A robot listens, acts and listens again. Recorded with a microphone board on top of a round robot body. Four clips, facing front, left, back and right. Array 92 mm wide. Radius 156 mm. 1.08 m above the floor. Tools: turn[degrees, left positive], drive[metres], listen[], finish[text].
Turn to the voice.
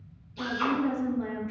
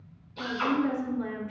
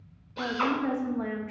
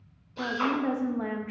Thought: The woman speaking: 120° right.
Action: turn[-120]
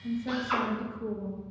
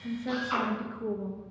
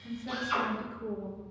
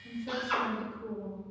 Thought: The woman speaking is now 70° left.
Action: turn[70]
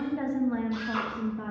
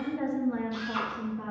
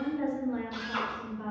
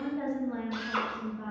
Thought: The woman speaking is now 20° left.
Action: turn[20]
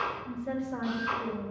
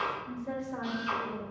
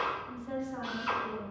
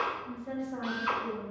Thought: The woman speaking is now 10° left.
Action: turn[10]
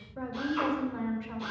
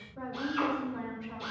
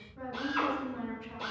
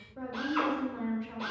Action: finish[Found it: a woman speaking, straight ahead, 2 to 4 m away.]